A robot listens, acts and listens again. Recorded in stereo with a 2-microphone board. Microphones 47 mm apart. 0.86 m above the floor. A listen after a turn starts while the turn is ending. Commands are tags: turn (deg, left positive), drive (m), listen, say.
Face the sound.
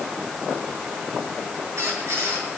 <turn deg="-75"/>
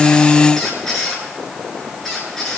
<say>Facing the squeak, over 4 m away.</say>